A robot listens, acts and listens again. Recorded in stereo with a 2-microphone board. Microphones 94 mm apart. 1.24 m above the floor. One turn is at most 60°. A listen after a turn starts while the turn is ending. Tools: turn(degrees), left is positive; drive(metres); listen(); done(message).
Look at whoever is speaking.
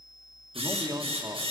turn(degrees=-35)
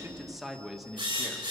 done("Facing the man speaking, 1 to 2 m away.")